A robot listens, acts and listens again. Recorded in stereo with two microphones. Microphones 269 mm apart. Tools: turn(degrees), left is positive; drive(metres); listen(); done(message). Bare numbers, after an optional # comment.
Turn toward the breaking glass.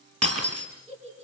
# The breaking glass: about 65° right or 115° right.
turn(-65)
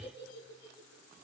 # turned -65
listen()
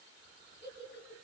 done("I heard breaking glass, but can't make it out now. It was about straight ahead or 50° right.")